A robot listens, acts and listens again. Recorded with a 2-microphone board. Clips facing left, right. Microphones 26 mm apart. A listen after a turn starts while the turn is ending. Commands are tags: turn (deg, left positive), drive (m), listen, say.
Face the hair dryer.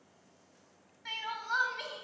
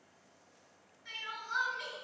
<listen/>
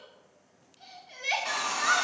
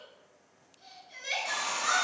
<turn deg="45"/>
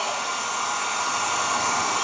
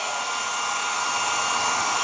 <say>Found it: a hair dryer, straight ahead, 1 to 2 m away.</say>